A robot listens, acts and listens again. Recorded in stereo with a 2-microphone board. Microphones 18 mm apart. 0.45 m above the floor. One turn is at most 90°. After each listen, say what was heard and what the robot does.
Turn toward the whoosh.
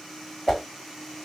Turn 30° left.
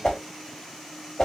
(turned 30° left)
So it is at 145° left. Turn 90° left.
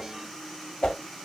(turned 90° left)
The whoosh is now 70° left. Turn 70° left.
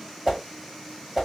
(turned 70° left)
Found it: a whoosh, straight ahead.